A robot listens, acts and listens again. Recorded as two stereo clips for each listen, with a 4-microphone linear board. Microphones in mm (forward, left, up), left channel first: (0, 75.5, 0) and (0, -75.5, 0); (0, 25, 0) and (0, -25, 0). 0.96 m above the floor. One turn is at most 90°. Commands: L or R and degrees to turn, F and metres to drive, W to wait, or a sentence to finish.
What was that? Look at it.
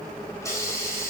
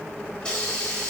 L20
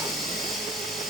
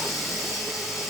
Found it: a hiss, straight ahead, over 4 m away.